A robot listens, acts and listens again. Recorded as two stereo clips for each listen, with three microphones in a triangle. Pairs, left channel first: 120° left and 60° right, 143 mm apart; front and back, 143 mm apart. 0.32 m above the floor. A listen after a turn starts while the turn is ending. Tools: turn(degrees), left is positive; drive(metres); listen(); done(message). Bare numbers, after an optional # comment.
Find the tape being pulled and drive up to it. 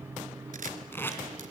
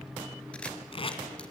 # The tape being pulled: 45° left.
turn(45)
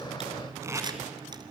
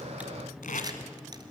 # The tape being pulled is now 10° left.
turn(10)
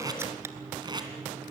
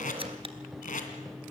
drive(1.0)
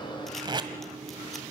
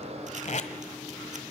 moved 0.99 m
# The tape being pulled is now 10° right.
turn(-10)
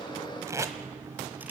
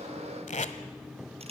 drive(1.0)
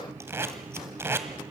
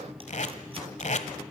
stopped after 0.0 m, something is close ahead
# The tape being pulled is now 10° left.
turn(10)
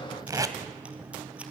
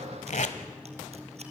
done("Arrived at the tape being pulled, straight ahead.")